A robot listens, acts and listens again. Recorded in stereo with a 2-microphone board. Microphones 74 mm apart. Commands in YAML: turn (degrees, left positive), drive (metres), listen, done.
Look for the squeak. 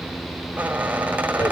turn: -20
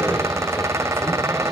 turn: -140
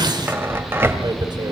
turn: -35
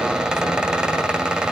turn: -15
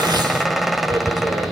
done: "Facing the squeak, 1 to 2 m away."